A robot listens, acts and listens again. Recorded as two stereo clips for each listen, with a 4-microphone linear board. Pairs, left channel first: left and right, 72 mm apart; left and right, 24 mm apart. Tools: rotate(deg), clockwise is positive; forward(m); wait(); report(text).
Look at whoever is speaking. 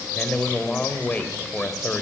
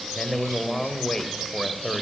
rotate(-20)
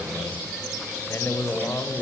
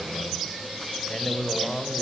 rotate(-140)
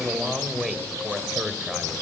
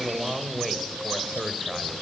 report("Found it: a man speaking, straight ahead, 2 to 4 m away.")